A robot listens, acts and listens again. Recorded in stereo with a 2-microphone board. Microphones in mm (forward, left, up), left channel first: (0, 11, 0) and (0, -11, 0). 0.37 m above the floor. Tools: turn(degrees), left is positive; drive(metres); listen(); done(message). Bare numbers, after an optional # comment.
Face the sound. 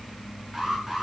# The alarm: about 20° right or 160° right.
turn(-20)
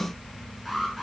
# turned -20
done("Found it: an alarm, straight ahead, over 4 m away.")